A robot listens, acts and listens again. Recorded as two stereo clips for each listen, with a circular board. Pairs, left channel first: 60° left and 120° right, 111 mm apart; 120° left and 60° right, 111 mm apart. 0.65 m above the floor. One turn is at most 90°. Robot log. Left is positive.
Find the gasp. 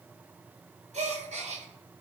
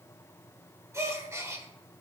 note: The gasp: 125° right.
cmd yaw -90
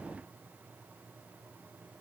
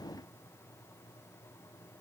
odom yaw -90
note: Nothing new. It was at 35° right.
cmd yaw -35
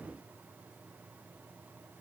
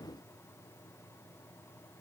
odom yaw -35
end: Facing where the gasp came from. I can't hear it now.